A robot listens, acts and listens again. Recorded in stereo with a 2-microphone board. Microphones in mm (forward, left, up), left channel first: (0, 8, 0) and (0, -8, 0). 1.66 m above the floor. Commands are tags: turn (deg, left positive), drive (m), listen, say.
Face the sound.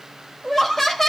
<turn deg="30"/>
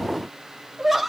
<say>Facing the laughter, 2 to 4 m away.</say>